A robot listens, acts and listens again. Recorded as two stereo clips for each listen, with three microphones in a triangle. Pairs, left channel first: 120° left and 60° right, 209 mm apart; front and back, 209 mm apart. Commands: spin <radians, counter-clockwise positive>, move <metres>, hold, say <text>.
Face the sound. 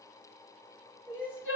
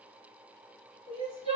spin 2.18
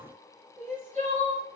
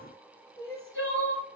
say Found it: crying, straight ahead, under 1 m away.